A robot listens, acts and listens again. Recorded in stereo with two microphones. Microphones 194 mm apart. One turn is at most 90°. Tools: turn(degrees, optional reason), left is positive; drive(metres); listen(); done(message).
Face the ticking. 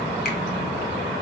listen()
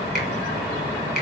listen()
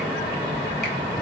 done("I can't make out ticking to turn to.")